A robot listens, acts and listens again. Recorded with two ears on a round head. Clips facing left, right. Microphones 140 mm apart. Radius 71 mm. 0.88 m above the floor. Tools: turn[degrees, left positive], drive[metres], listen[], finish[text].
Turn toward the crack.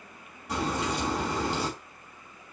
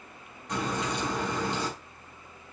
Action: turn[30]
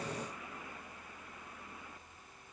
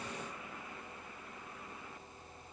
Action: listen[]
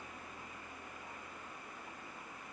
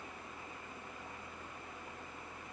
Action: finish[I heard a crack, but can't make it out now. It was about 20° right or 140° left.]